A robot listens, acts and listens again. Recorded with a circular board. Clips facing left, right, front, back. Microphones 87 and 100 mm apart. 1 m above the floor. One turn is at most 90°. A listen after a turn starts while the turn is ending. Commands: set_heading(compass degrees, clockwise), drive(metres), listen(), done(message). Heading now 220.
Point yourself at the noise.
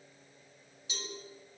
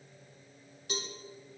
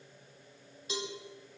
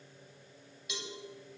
set_heading(275)
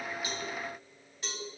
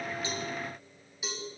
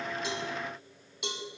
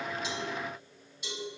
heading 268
done("Found it: a cowbell, straight ahead, 2 to 4 m away.")